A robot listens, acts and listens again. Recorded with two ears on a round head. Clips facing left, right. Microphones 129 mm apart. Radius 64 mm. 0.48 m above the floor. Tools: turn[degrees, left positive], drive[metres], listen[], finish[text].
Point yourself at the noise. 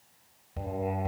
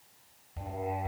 Thought: The singing: about 65° left or 115° left.
Action: turn[65]
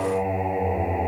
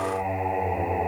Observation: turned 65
Thought: So it is at 20° left.
Action: turn[20]
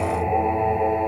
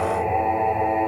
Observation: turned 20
Action: finish[Found it: singing, straight ahead, 2 to 4 m away.]